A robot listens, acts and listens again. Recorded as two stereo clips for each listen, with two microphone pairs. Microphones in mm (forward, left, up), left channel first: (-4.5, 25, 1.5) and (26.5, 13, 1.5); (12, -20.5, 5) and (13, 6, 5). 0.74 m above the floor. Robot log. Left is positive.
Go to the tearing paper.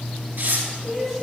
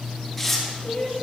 note: The tearing paper: 15° right.
cmd yaw -15
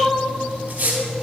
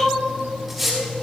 cmd fwd 1.0
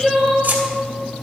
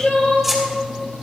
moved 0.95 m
cmd fwd 1.0
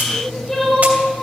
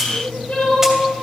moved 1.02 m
cmd idle
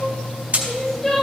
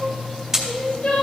note: The tearing paper is now 10° left.
cmd yaw +10
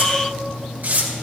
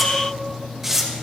cmd fwd 1.0
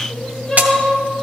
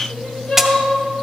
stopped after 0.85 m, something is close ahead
note: The tearing paper is now 10° left.
cmd yaw +10
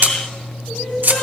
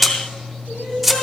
end: I am next to the tearing paper.